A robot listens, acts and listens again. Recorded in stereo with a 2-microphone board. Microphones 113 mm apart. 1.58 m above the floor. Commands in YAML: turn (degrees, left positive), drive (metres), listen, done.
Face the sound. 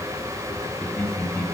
turn: 30
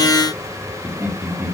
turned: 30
turn: -20
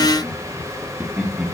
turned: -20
turn: -15
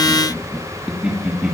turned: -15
turn: -10
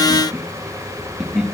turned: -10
done: "Facing the laughter."